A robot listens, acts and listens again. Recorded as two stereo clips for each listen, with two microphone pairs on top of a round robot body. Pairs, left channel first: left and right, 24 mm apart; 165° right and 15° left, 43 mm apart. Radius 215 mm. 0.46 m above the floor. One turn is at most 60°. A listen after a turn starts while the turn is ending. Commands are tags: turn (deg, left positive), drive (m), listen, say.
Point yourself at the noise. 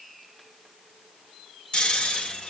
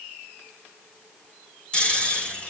<turn deg="60"/>
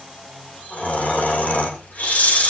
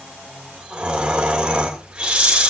<turn deg="60"/>
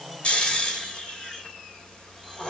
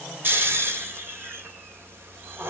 <turn deg="35"/>
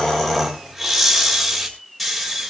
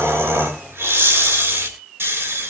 <say>Facing the snoring, 2 to 4 m away.</say>